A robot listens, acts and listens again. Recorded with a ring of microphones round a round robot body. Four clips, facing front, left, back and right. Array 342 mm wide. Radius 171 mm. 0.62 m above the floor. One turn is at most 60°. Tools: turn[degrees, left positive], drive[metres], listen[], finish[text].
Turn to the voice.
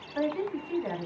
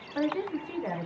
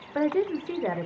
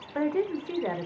Thought: The woman speaking: 160° right.
Action: turn[-60]
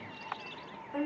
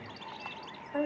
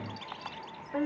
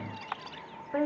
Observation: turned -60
Thought: The woman speaking is now 100° right.
Action: turn[-60]
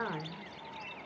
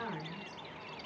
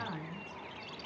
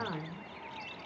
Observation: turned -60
Thought: Nothing new. It was at 40° right.
Action: turn[-40]
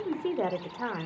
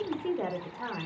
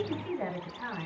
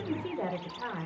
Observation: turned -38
Action: finish[Found it: a woman speaking, straight ahead, 2 to 4 m away.]